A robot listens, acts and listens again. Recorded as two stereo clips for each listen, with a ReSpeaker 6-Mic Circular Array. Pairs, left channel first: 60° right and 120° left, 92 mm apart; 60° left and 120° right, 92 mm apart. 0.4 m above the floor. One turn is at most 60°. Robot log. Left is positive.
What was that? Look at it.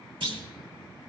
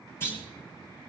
note: The clunk: 120° left.
cmd yaw +60
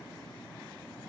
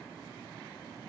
note: Nothing new. It was at 60° left.
cmd yaw +60
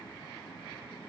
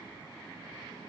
end: Facing where the clunk came from. I can't hear it now.